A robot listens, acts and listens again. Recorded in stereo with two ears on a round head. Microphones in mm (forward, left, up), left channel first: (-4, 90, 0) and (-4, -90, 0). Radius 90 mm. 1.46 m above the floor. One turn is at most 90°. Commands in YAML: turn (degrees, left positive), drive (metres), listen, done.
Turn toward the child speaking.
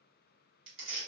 listen: true
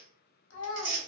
turn: 60
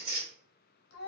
turn: 55
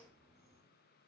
listen: true
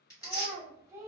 turn: -15
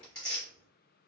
listen: true
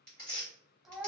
done: "Found it: a child speaking, straight ahead, under 1 m away."